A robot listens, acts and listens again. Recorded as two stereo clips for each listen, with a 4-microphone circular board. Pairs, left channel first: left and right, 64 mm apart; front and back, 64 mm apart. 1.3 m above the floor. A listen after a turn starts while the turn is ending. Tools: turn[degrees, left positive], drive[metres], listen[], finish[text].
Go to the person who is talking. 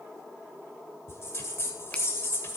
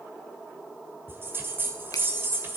Action: listen[]
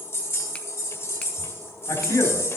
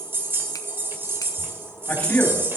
Thought: The man speaking: 65° left.
Action: turn[65]
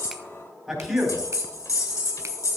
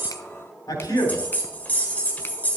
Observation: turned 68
Action: drive[1.0]
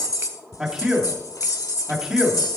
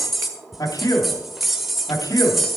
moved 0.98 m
Thought: The man speaking is now 10° right.
Action: turn[-10]
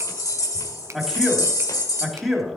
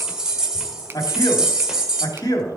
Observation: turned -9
Action: drive[1.0]
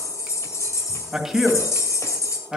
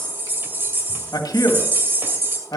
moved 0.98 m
Action: drive[1.0]
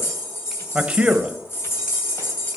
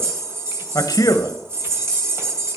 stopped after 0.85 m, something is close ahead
Thought: The man speaking is now 20° right.
Action: turn[-20]
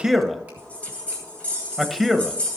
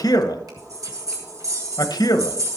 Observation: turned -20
Action: finish[Arrived at the man speaking, straight ahead.]